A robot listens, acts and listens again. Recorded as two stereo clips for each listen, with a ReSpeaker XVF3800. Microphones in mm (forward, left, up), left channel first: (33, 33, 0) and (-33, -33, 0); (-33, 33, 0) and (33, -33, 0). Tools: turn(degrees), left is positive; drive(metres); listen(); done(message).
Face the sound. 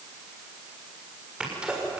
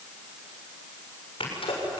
turn(degrees=145)
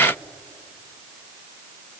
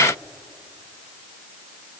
done("Facing where the sneeze came from. I can't hear it now.")